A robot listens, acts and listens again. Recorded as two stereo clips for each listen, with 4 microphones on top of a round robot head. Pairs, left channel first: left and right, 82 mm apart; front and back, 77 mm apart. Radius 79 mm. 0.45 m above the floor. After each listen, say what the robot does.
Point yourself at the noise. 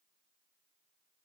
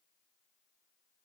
Keep listening.
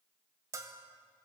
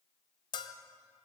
Turn 30° right.
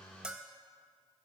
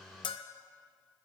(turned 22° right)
Turn 10° right.
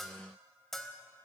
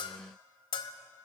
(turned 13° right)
Found it: a bell, straight ahead.